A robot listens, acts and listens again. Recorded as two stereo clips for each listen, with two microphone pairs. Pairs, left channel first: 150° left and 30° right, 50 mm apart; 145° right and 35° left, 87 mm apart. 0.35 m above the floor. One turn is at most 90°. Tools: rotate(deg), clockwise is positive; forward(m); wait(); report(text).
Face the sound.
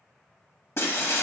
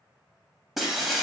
rotate(-90)
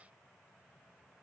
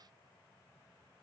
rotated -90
rotate(-35)
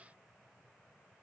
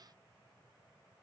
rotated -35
report("Facing where the breaking glass came from. I can't hear it now.")